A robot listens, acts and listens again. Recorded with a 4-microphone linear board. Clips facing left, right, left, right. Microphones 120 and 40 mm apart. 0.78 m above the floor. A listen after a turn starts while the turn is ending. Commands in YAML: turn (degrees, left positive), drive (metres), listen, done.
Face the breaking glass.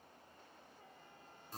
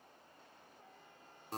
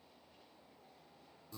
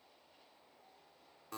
listen: true
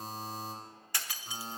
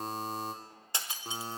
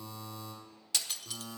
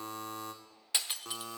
turn: -20
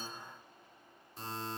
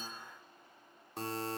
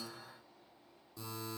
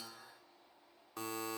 listen: true
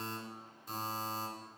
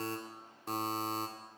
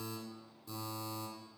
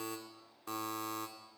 done: "I heard breaking glass, but can't make it out now. It was about straight ahead or 140° right."